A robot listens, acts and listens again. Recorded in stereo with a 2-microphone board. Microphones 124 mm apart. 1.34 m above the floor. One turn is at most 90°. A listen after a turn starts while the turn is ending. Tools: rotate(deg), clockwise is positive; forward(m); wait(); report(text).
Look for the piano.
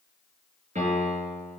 rotate(90)
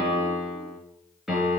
report("Found it: a piano, straight ahead, over 4 m away.")